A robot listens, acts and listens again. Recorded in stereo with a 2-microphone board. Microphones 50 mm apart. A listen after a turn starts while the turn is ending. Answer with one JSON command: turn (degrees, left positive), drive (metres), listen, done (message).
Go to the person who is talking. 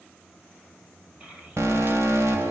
{"turn": -25}
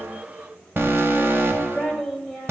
{"drive": 1.0}
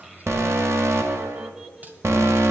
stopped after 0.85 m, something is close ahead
{"turn": -10}
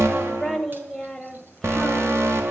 {"done": "I am next to the child speaking."}